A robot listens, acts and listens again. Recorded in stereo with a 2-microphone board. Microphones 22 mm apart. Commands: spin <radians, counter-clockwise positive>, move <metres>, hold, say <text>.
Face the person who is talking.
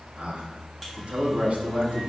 spin -1.22
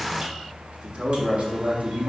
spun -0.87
spin -1.13
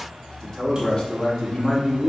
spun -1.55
spin 0.44
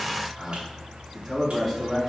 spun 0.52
say Found it: a man speaking, straight ahead.